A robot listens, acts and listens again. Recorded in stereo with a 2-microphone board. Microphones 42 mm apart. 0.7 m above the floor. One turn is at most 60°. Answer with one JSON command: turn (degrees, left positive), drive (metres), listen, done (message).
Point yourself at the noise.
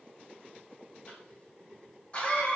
{"turn": 30}
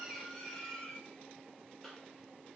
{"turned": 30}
{"done": "Facing the cough, under 1 m away."}